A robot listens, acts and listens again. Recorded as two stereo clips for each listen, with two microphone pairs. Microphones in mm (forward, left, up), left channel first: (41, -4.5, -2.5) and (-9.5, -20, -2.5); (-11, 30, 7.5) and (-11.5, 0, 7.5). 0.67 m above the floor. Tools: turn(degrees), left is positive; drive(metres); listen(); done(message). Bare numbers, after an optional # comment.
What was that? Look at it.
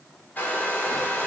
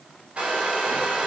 # The hair dryer: 40° right.
turn(-40)
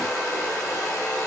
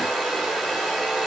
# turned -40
done("Found it: a hair dryer, straight ahead, under 1 m away.")